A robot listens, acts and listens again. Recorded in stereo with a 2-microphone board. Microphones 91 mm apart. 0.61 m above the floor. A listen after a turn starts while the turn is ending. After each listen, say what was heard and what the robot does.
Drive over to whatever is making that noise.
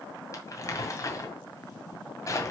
The crumpling: about 35° left or 145° left. Turn 35° left.
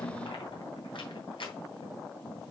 So it is at 110° left. Turn 110° left.
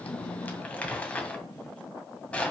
The crumpling is now 15° left. Turn 15° left.
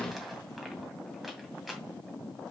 Drive 1.0 m forward.
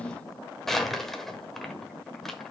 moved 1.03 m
Drive 1.0 m forward.
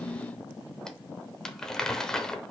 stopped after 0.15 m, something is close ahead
Arrived at the crumpling, straight ahead.